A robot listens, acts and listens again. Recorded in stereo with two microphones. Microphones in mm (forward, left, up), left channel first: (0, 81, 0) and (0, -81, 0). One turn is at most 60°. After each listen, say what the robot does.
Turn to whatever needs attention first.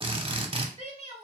Turn 40° right.
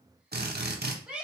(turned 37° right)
Found it: a shout, straight ahead, 1 to 2 m away.